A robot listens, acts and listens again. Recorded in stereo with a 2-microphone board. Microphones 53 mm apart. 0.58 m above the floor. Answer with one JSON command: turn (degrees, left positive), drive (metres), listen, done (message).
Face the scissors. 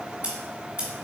{"turn": -25}
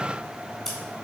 {"done": "Found it: scissors, straight ahead, 1 to 2 m away."}